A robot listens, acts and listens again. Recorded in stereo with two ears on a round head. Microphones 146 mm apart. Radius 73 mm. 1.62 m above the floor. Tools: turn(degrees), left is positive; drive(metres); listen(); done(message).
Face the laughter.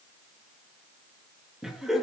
turn(degrees=30)
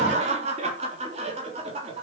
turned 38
turn(degrees=-35)
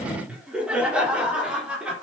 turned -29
done("Found it: laughter, straight ahead, over 4 m away.")